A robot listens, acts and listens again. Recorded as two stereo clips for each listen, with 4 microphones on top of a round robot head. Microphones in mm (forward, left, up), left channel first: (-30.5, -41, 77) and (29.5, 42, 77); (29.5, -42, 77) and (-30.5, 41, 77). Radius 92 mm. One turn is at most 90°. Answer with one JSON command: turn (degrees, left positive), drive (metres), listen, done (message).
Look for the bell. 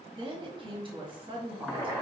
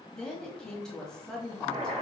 {"listen": true}
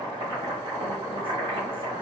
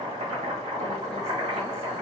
{"listen": true}
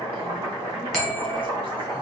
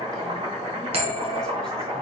{"turn": 90}
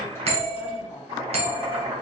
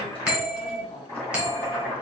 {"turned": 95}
{"turn": 45}
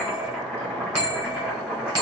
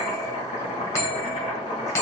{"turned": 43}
{"done": "Facing the bell, 1 to 2 m away."}